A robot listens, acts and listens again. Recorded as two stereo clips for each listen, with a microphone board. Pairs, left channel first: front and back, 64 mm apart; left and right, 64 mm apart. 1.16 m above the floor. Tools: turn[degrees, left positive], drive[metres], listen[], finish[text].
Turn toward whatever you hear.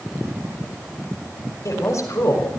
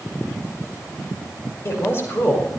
Thought: The woman speaking: 40° left.
Action: turn[40]
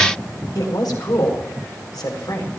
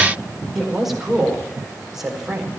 Thought: The woman speaking is now 10° right.
Action: turn[-10]
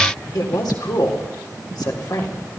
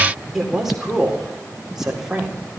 Thought: The woman speaking is now 10° right.
Action: turn[-10]
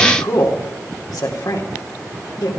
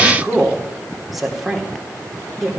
Action: finish[Facing the woman speaking.]